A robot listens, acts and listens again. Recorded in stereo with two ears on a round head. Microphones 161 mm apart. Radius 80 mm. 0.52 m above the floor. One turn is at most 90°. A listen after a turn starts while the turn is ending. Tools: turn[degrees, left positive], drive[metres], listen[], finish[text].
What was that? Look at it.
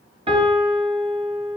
Thought: The piano: about 30° right or 150° right.
Action: turn[-30]
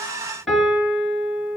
Action: finish[Found it: a piano, straight ahead, over 4 m away.]